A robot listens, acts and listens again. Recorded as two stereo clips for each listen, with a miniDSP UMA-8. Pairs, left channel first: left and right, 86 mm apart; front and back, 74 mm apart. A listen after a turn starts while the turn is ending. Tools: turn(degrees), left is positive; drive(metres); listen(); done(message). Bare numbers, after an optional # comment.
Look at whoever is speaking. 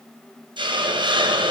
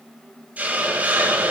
listen()
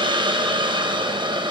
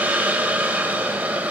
listen()
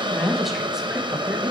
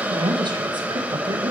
# The woman speaking: straight behind.
turn(180)
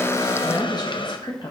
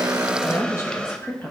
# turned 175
# The woman speaking is now 60° left.
turn(60)
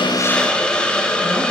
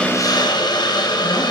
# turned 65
listen()
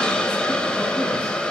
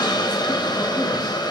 listen()
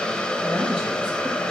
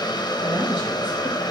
done("I heard a woman speaking from this way, but can't make it out now.")